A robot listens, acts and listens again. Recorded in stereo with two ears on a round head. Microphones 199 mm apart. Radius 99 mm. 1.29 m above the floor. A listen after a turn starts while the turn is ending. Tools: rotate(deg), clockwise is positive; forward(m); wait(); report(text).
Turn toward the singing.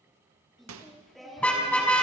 rotate(-30)
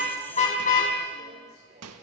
rotate(35)
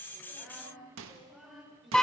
report("Found it: singing, straight ahead, over 4 m away.")